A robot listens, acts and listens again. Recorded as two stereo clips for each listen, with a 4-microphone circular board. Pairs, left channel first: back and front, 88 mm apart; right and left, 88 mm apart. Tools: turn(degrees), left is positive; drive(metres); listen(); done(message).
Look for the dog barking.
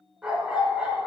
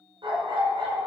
turn(degrees=80)
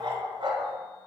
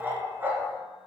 turn(degrees=25)
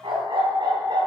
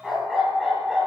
done("Facing the dog barking.")